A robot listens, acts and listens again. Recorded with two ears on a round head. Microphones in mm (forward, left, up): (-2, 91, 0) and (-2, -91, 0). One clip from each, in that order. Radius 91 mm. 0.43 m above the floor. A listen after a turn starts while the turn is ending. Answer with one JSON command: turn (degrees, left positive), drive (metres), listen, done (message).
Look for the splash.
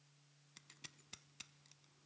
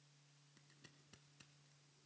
{"listen": true}
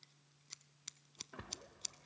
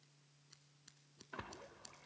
{"turn": -30}
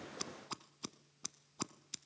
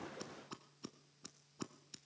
{"listen": true}
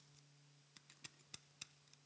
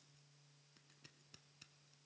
{"done": "I heard a splash, but can't make it out now. It was about straight ahead or 120° right."}